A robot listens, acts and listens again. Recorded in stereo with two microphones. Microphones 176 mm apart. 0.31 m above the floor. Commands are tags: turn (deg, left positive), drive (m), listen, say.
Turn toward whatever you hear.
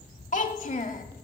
<turn deg="45"/>
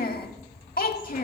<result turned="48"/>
<turn deg="75"/>
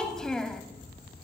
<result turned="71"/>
<say>Facing the child speaking, under 1 m away.</say>